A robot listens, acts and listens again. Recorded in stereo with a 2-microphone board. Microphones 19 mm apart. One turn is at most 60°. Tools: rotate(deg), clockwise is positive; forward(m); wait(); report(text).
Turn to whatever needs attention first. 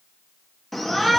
rotate(-30)
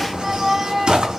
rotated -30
rotate(25)
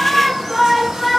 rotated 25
report("Found it: a shout, straight ahead, 2 to 4 m away.")